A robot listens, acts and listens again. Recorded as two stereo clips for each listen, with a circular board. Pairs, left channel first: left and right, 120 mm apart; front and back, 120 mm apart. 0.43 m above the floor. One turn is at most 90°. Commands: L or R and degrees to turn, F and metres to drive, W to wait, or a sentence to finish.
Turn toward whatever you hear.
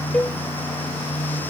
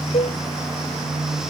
L10
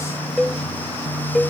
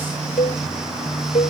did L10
Facing the cowbell.